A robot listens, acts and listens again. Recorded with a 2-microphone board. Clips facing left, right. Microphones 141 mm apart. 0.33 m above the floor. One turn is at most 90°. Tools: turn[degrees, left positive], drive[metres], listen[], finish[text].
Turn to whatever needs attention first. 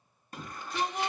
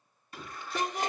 Thought: The shout: about 40° left or 140° left.
Action: turn[40]
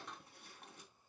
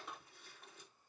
Action: listen[]
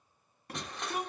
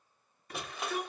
Thought: So it is at 95° left.
Action: turn[90]
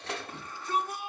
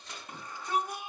Thought: The shout is now 20° right.
Action: turn[-20]
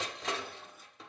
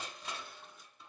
Action: listen[]
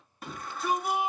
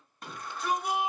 Action: finish[Found it: a shout, straight ahead.]